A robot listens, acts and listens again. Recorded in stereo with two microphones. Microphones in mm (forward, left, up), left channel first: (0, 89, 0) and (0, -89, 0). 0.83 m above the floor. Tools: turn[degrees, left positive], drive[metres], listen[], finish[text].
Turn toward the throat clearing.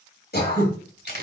Thought: The throat clearing: about 60° left or 120° left.
Action: turn[60]
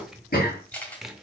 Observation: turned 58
Thought: So it is at 60° left.
Action: turn[60]
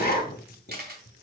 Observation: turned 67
Thought: The throat clearing is now 10° right.
Action: turn[-10]
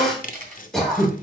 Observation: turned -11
Action: finish[Facing the throat clearing, 2 to 4 m away.]